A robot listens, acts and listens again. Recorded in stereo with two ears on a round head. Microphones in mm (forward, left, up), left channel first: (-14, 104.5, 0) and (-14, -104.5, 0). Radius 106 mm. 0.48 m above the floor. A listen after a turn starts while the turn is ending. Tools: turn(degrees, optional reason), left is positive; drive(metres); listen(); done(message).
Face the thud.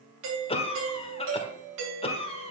listen()
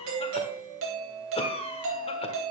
listen()
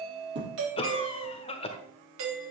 turn(degrees=-50, reason="The thud: about 50° right or 130° right.")
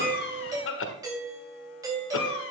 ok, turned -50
listen()
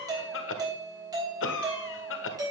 done("I heard a thud, but can't make it out now. It was about straight ahead or 80° right.")